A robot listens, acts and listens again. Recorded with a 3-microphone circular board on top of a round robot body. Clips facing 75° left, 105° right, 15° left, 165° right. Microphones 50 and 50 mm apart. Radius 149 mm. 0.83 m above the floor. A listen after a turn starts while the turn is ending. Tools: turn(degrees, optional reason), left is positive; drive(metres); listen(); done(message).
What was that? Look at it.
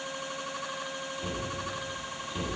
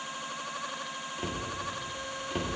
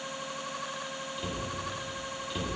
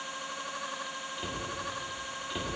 turn(degrees=-90, reason="The cupboard door: 90° right.")
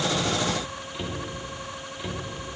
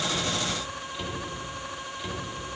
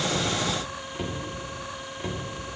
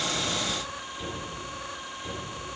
done("Facing the cupboard door.")